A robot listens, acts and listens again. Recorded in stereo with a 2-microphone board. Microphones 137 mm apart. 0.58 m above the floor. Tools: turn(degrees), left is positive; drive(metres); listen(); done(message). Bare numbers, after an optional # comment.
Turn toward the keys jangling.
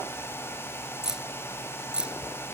turn(-30)
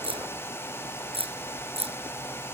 # So it is at 135° right.
turn(-135)
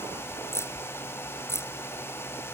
# The keys jangling is now 20° left.
turn(20)
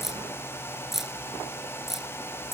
done("Found it: keys jangling, straight ahead.")